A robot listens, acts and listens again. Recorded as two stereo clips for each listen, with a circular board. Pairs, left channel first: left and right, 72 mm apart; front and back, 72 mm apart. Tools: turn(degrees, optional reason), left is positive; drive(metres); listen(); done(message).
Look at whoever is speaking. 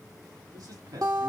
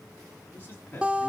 turn(degrees=-65, reason="The man speaking: 65° right.")
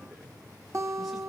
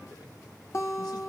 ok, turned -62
listen()
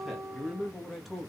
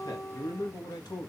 done("Facing the man speaking.")